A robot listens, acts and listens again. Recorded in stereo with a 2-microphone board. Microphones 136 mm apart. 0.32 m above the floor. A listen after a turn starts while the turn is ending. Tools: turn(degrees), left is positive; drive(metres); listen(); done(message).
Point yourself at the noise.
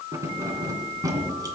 turn(degrees=-30)
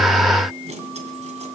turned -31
turn(degrees=-120)
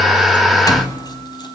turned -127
turn(degrees=30)
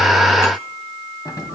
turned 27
turn(degrees=30)
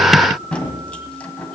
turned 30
turn(degrees=10)
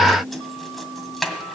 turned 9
done("Found it: keys jangling, straight ahead, 1 to 2 m away.")